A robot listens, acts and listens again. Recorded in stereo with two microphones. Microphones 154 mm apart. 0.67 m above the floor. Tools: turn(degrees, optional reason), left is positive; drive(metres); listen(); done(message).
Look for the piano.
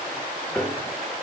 turn(degrees=30)
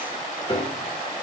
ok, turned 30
turn(degrees=145, reason="So it is at 145° left.")
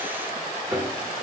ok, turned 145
turn(degrees=-15, reason="The piano is now 15° right.")
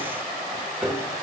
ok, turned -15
done("Facing the piano, 1 to 2 m away.")